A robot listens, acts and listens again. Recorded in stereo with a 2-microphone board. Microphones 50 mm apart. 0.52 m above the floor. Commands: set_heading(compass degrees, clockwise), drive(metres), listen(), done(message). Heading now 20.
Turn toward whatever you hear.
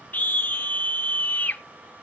set_heading(345)
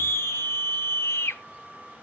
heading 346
set_heading(241)
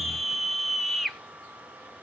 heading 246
done("Found it: a scream, straight ahead, 1 to 2 m away.")